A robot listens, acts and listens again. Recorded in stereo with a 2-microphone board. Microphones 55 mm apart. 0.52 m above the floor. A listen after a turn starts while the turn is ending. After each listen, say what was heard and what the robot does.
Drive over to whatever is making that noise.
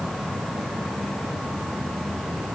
Keep listening.
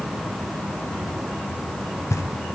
Turn 90° left.
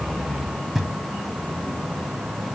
Drive 1.0 m forward.
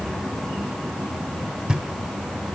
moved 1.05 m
The knocking is now 20° right. Turn 20° right.
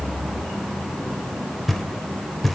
Drive 1.0 m forward.
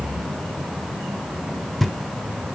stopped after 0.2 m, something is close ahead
Arrived at the knocking, straight ahead.